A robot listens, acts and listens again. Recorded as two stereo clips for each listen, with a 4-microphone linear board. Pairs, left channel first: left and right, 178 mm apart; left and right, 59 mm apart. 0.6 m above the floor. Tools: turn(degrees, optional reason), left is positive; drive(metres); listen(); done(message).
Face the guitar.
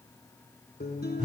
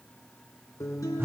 turn(degrees=65, reason="The guitar: about 65° left or 115° left.")
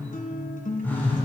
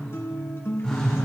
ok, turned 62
turn(degrees=50, reason="So it is at 50° left.")
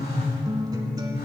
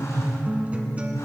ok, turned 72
turn(degrees=-25, reason="The guitar is now 25° right.")
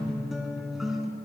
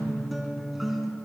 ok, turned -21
done("Found it: a guitar, straight ahead, 1 to 2 m away.")